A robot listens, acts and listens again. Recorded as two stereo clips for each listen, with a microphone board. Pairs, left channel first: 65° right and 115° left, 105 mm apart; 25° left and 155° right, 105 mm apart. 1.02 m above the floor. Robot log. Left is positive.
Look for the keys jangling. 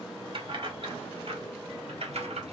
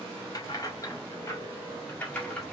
note: The keys jangling: 100° left.
cmd yaw +100
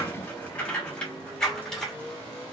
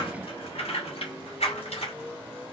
note: The keys jangling is now 20° left.
cmd yaw +20
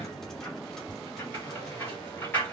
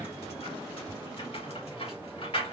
end: Found it: keys jangling, straight ahead, 2 to 4 m away.